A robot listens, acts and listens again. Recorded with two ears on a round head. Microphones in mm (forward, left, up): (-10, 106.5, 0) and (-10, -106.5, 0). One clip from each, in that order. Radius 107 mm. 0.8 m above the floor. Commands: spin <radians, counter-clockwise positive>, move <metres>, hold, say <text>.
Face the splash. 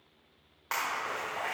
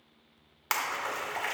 spin -1.31
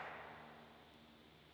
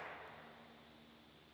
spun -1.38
hold
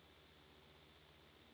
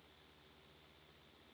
say I heard a splash, but can't make it out now. It was about 5° left or 25° right.